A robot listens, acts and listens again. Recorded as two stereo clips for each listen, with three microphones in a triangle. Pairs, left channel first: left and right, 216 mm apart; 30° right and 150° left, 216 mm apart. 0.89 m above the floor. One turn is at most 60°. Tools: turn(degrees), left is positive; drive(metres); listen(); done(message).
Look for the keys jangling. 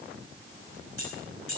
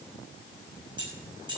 turn(degrees=60)
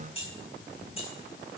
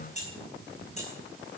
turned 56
turn(degrees=25)
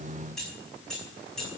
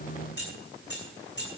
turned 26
done("Found it: keys jangling, straight ahead, over 4 m away.")